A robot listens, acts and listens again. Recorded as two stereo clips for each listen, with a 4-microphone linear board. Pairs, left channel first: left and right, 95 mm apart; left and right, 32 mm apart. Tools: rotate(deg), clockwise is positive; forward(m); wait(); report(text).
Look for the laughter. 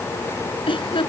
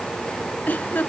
rotate(-70)
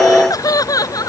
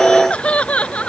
rotate(-40)
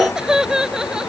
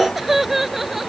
rotate(10)
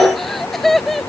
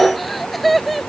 report("Facing the laughter.")